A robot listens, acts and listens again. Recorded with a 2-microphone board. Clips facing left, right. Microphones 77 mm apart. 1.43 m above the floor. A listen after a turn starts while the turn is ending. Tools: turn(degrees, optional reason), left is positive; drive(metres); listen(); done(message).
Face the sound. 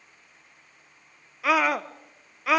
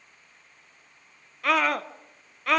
turn(degrees=30)
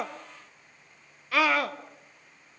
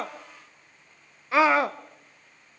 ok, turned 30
turn(degrees=-25, reason="So it is at 25° right.")
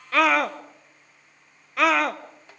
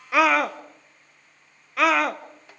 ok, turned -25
done("Facing the scream, under 1 m away.")